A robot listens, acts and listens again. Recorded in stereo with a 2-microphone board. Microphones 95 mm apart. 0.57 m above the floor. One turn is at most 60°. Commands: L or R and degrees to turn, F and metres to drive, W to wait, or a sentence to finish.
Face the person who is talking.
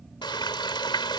W
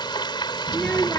L30
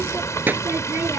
R20
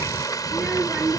R10
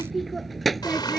Facing the child speaking.